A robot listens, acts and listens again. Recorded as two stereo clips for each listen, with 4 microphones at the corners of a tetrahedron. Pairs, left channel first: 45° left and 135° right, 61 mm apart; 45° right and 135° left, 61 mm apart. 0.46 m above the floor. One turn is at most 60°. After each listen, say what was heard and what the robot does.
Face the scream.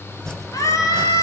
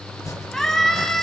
The scream: 35° left. Turn 35° left.
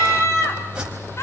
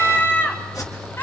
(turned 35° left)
Found it: a scream, straight ahead, 2 to 4 m away.